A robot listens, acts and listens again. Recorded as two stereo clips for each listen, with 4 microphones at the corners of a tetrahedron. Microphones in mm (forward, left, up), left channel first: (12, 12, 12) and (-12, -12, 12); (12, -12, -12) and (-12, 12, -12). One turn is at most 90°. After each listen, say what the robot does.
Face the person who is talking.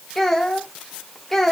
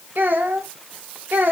Turn 90° left.
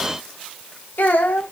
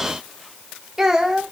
Turn 60° left.
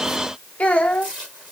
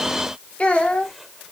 Found it: a child speaking, straight ahead.